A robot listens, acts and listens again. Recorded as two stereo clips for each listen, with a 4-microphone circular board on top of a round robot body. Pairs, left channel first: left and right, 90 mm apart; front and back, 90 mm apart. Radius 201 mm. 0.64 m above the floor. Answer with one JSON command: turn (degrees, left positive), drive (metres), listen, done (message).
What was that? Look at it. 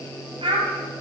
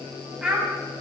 {"turn": -95}
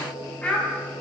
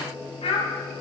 {"turn": 15}
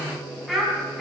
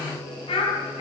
{"done": "Found it: a child speaking, straight ahead, over 4 m away."}